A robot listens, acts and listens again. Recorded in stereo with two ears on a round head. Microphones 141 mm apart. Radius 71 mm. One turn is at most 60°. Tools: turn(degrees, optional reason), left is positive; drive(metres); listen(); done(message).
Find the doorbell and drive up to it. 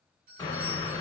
turn(degrees=-60, reason="The doorbell: about 60° right or 120° right.")
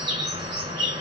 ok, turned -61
listen()
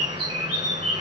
listen()
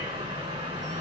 done("I heard a doorbell, but can't make it out now. It was about 5° left or 60° right. I did not reach it.")